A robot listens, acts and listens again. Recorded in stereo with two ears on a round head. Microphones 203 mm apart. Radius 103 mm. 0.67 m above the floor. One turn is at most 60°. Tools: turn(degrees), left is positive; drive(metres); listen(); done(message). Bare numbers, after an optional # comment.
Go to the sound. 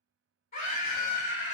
# The scream: about 40° left or 140° left.
turn(40)
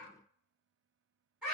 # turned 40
drive(1.0)
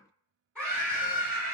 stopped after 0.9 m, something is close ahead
done("I am next to the scream.")